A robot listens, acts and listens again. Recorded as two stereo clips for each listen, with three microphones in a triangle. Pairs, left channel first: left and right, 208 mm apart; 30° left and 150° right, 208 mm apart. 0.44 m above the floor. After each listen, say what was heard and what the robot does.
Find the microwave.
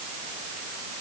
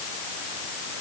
Keep listening.
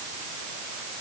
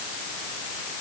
Keep listening.
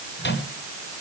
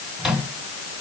The microwave: 120° left. Turn 120° left.
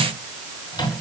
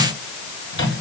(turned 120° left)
The microwave is now 20° left. Turn 20° left.
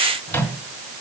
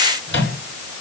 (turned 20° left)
The microwave is now 10° left. Turn 10° left.
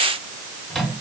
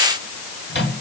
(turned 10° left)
Facing the microwave.